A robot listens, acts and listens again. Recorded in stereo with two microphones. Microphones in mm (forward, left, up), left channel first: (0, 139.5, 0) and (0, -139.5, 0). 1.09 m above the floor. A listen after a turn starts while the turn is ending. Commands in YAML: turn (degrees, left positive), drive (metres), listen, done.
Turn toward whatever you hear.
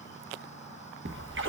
turn: -45
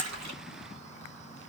listen: true
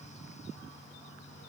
done: "I heard a splash, but can't make it out now. It was about straight ahead or 90° right."